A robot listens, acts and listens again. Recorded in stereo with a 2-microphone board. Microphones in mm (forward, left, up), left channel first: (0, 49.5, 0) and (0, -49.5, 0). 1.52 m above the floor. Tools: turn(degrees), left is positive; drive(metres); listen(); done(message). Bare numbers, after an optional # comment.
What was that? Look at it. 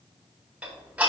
turn(-30)
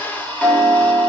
# So it is at 15° left.
turn(15)
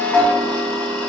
# The ticking is now 10° left.
turn(10)
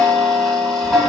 done("Facing the ticking.")